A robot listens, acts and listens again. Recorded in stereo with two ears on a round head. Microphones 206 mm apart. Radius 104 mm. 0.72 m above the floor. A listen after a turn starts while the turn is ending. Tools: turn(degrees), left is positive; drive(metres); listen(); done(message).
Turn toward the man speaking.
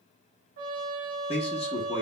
turn(degrees=25)
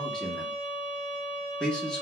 done("Facing the man speaking.")